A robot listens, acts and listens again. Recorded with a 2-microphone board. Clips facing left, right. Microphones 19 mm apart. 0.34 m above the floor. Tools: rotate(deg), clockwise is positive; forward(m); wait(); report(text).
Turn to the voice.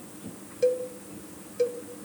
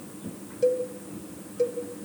wait()
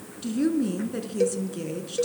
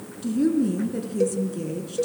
rotate(-25)
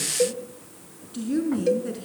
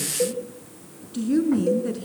report("Found it: a woman speaking, straight ahead.")